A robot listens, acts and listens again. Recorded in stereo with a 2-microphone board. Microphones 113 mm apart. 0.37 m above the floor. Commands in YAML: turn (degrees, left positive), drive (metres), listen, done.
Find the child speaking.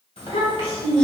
turn: 55
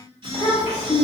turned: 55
turn: 65
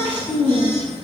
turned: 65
turn: 15
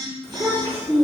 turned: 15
turn: 10
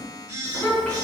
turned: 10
done: "Found it: a child speaking, straight ahead."